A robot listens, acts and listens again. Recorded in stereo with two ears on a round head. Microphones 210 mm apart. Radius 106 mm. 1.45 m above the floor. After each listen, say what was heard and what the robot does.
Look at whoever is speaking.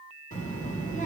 The child speaking: about 35° left or 145° left. Turn 35° left.
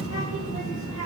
So it is at 110° left. Turn 110° left.
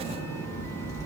The child speaking is now 15° left. Turn 15° left.
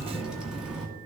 Found it: a child speaking, straight ahead, 1 to 2 m away.